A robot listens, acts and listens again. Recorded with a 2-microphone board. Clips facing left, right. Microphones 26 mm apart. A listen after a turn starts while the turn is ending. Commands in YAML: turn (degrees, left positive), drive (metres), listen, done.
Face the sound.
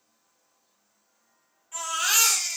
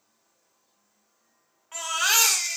turn: -50
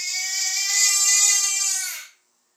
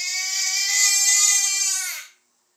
turn: -65
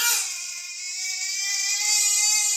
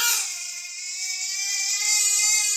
done: "Facing the baby crying."